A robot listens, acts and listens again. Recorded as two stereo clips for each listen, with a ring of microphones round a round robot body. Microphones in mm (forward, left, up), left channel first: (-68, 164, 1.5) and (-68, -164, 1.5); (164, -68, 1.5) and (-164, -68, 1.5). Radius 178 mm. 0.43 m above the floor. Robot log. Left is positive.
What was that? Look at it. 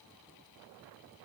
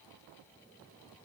cmd idle
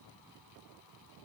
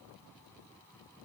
cmd idle
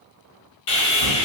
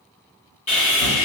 note: The sawing: 70° left.
cmd yaw +70
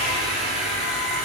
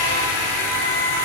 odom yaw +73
end: Found it: sawing, straight ahead, 1 to 2 m away.